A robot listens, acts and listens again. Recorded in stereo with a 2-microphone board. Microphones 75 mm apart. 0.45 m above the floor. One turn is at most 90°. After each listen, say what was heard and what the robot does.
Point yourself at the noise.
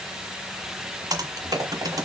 The typing on a keyboard: about 60° right or 120° right. Turn 60° right.
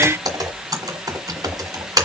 So it is at 55° right. Turn 55° right.
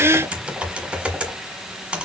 The typing on a keyboard is now 15° right. Turn 15° right.
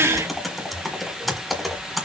Facing the typing on a keyboard.